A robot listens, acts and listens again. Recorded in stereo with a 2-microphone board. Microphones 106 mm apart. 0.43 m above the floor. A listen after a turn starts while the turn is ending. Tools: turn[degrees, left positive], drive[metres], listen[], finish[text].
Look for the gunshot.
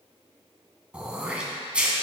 Action: listen[]
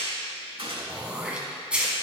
Thought: The gunshot: about 60° right or 120° right.
Action: turn[-60]
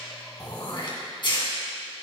Action: listen[]
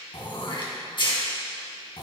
Action: finish[I heard a gunshot, but can't make it out now. It was about straight ahead or 60° right.]